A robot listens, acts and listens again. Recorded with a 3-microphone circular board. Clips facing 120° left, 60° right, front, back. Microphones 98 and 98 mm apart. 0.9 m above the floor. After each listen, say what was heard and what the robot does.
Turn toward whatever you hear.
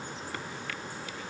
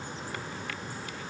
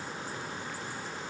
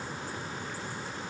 Keep listening.
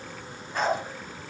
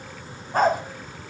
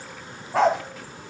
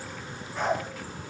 The dog barking: 10° right. Turn 10° right.
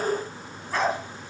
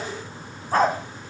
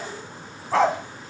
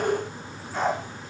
The dog barking is now 10° right. Turn 10° right.
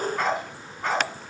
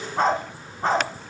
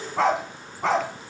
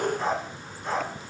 Facing the dog barking.